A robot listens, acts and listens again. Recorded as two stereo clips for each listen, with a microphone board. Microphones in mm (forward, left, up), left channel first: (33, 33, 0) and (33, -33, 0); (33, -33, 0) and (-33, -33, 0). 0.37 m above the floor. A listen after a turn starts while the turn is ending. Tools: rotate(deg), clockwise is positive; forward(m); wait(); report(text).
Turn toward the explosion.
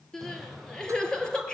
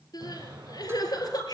rotate(-175)
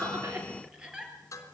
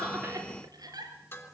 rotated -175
report("Facing where the explosion came from. I can't hear it now.")